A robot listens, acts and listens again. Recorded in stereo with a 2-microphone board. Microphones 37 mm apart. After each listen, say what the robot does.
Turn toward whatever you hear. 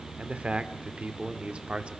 Turn 30° right.
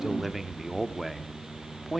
Found it: a man speaking, straight ahead, 1 to 2 m away.